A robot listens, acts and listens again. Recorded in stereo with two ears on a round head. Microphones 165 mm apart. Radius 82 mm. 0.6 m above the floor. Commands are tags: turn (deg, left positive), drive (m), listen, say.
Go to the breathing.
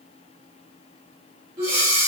<turn deg="-20"/>
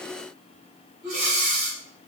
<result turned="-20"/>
<drive m="1.0"/>
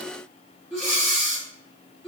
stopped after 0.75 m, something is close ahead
<say>Arrived at the breathing, straight ahead.</say>